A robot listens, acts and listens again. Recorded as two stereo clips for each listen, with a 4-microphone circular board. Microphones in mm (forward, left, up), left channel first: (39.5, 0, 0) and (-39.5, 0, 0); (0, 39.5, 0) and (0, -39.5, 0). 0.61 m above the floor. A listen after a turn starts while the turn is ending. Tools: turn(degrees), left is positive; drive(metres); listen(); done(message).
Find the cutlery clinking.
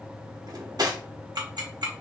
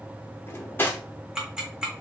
turn(degrees=150)
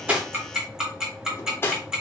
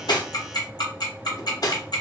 turn(degrees=60)
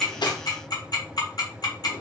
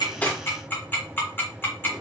listen()
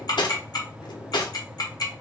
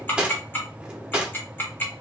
turn(degrees=-15)
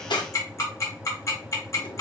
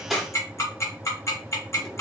listen()
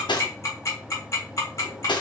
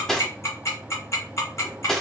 done("Facing the cutlery clinking, 1 to 2 m away.")